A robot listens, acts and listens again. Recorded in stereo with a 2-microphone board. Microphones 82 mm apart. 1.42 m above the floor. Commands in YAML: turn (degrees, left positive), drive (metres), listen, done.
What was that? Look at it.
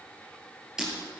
turn: -30
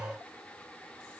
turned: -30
listen: true
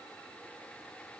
done: "I heard breaking glass, but can't make it out now. It was about 20° left or 140° right."